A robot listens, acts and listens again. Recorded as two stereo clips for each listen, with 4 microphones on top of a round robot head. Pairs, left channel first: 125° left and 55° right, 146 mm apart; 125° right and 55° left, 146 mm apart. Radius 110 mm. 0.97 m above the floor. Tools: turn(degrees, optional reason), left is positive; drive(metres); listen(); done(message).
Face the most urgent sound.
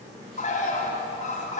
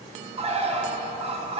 listen()
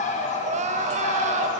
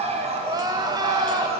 turn(degrees=-10, reason="The crying: 10° right.")
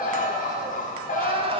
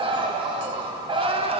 done("Facing the crying, under 1 m away.")